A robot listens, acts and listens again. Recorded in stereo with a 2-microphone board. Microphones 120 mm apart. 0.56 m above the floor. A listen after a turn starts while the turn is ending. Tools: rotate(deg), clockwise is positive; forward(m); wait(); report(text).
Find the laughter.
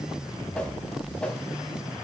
wait()
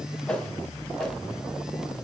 wait()
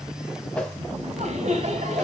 rotate(70)
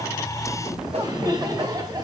rotate(30)
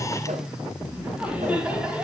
rotate(10)
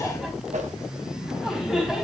report("Facing the laughter, over 4 m away.")